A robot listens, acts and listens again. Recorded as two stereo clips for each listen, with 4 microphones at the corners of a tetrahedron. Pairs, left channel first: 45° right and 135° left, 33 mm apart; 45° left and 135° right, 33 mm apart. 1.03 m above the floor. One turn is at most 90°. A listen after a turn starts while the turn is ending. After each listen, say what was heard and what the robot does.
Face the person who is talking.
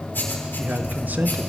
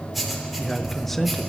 The man speaking: 125° left. Turn 90° left.
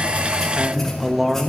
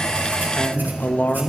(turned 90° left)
The man speaking is now 55° left. Turn 55° left.
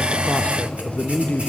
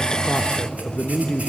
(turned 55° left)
Found it: a man speaking, straight ahead.